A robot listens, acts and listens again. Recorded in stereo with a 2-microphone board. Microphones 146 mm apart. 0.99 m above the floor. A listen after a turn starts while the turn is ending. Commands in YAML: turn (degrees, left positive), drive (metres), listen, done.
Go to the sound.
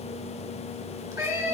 turn: -25
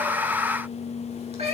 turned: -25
turn: -130
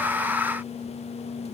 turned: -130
listen: true
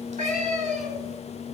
turn: -50
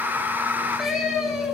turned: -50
drive: 1.0
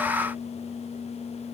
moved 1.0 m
listen: true
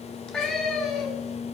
drive: 1.0
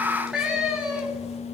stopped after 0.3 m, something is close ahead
done: "Blocked. The cat meowing is further on, straight ahead."